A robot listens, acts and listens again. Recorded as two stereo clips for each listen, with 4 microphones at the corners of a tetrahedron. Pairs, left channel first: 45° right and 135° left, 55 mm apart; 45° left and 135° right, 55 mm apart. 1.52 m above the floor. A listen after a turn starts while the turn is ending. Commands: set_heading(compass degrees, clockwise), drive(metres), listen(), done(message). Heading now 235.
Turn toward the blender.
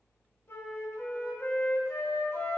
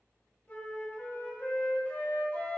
listen()
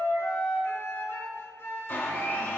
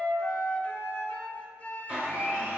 set_heading(310)
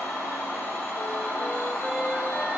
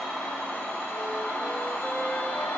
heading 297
set_heading(312)
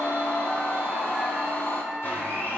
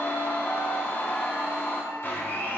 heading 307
done("Facing the blender, 2 to 4 m away.")